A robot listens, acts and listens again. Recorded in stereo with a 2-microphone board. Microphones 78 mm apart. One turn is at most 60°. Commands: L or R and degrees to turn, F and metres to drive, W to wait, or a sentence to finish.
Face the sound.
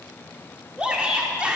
R15
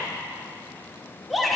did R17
Found it: a shout, straight ahead, 1 to 2 m away.